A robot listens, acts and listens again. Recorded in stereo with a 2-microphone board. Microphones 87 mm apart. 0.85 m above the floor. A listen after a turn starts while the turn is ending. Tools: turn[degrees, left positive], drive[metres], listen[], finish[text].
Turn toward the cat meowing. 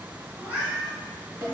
Thought: The cat meowing: about 15° right or 165° right.
Action: turn[-15]
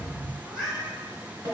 Action: finish[Facing the cat meowing.]